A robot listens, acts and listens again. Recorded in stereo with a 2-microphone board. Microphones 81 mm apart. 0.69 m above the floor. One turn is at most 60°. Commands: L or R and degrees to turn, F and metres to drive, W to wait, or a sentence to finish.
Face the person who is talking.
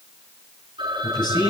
L60
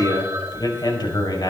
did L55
L60
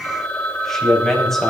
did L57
Facing the man speaking.